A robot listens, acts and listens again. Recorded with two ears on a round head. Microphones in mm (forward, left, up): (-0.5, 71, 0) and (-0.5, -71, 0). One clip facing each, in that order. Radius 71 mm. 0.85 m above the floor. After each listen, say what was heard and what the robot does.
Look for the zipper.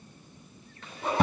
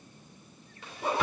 Turn 30° right.
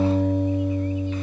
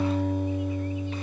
Keep listening.
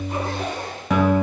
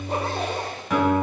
So it is at 145° right. Turn 145° right.
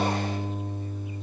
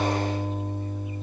Keep listening.
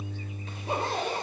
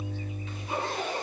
The zipper is now 35° left. Turn 35° left.
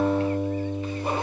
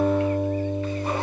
Keep listening.
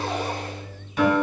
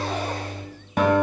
Keep listening.
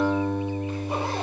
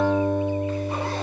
I heard a zipper from this way, but can't make it out now.